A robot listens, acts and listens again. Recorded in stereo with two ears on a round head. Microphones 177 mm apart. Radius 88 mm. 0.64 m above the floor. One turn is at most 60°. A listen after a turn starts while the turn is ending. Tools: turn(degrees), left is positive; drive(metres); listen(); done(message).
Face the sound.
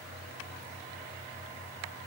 listen()
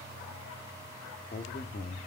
turn(degrees=40)
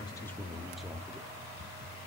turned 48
done("Facing the man speaking, under 1 m away.")